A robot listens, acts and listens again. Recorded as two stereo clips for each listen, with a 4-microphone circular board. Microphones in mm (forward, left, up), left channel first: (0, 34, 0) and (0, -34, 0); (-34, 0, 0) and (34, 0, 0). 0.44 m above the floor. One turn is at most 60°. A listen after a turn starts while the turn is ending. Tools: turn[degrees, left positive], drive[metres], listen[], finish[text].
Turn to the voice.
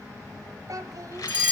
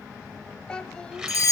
Thought: The child speaking: 105° right.
Action: turn[-60]
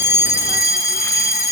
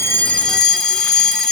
Thought: Nothing new. It was at 45° right.
Action: turn[-45]
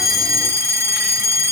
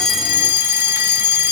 Action: listen[]
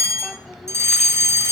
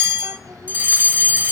Action: finish[Facing where the child speaking came from. I can't hear it now.]